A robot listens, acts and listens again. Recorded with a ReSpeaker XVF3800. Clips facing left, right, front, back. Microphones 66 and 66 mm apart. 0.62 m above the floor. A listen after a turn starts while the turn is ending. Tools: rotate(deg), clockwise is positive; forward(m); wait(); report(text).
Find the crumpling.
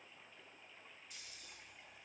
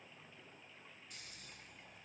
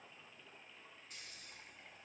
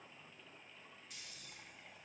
wait()
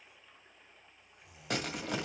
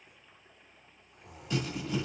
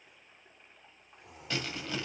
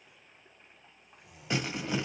rotate(-110)
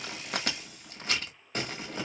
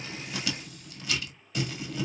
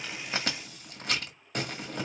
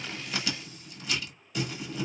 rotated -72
rotate(-40)
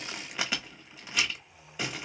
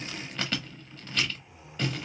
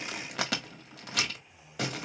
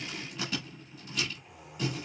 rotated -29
rotate(-10)
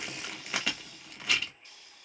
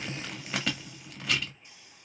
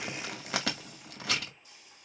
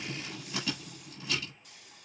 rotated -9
report("Found it: crumpling, straight ahead, 1 to 2 m away.")